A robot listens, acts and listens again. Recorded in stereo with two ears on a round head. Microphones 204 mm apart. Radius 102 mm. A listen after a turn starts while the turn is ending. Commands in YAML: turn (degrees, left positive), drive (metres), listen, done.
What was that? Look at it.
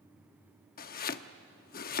turn: 40
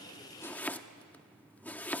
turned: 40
turn: 10
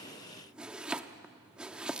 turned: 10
done: "Facing the chopping, under 1 m away."